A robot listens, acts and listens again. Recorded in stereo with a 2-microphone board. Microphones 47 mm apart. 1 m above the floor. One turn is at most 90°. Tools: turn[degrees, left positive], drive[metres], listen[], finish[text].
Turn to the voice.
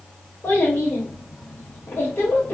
Thought: The child speaking: about 70° left or 110° left.
Action: turn[70]
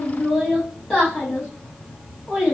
Action: finish[Facing the child speaking.]